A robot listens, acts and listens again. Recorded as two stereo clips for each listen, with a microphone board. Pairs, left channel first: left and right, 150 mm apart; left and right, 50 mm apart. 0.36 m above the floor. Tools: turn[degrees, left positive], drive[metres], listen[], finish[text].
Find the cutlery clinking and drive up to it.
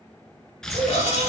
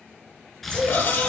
Thought: The cutlery clinking: about 45° left or 135° left.
Action: turn[45]
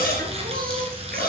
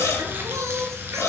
Thought: So it is at 85° left.
Action: turn[85]
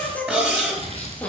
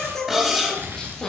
Action: drive[1.0]
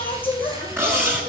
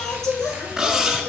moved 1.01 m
Thought: The cutlery clinking is now 15° right.
Action: turn[-15]
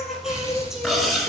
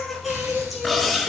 Action: drive[1.0]
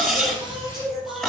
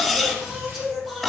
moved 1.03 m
Action: drive[1.0]
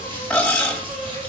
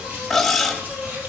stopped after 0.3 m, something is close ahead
Thought: The cutlery clinking is now 10° left.
Action: turn[10]
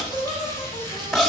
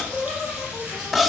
Action: finish[I am next to the cutlery clinking.]